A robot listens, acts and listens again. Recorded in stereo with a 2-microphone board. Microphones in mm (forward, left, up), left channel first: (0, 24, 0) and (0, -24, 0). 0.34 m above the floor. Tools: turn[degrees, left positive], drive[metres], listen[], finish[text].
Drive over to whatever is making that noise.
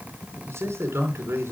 Thought: The man speaking: about 70° right or 110° right.
Action: turn[-70]
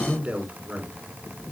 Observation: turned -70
Thought: So it is at 35° right.
Action: turn[-35]
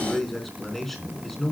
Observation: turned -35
Action: drive[1.0]
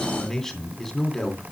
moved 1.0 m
Action: drive[1.0]
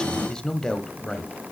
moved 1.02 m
Thought: The man speaking is now 15° left.
Action: turn[15]
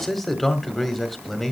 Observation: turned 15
Action: drive[1.0]
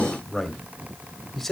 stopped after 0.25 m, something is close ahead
Action: finish[I am next to the man speaking.]